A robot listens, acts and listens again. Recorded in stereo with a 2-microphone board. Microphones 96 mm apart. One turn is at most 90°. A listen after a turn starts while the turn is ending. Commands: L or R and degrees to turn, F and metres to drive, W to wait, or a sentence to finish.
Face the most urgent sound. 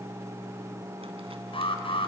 L65
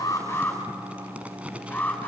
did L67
L15
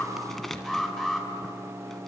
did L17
Found it: an alarm, straight ahead, over 4 m away.